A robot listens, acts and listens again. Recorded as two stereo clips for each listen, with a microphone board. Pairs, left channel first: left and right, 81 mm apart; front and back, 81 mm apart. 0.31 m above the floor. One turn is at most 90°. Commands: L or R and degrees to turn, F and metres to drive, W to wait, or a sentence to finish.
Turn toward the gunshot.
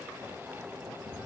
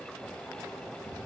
W
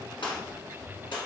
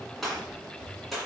L90
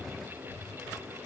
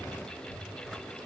Facing where the gunshot came from. I can't hear it now.